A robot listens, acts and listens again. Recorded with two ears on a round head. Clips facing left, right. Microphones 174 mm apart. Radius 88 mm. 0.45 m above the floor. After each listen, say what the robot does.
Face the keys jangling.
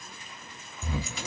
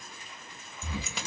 Turn 55° right.
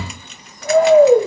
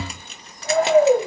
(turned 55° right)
Keep listening.
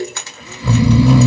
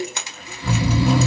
Turn 15° right.
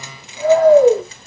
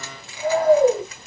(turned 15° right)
Keep listening.
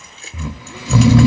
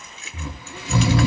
Turn 30° left.
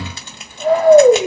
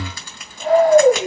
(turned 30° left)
Turn 20° left.
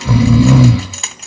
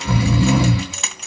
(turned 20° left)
Found it: keys jangling, straight ahead, 1 to 2 m away.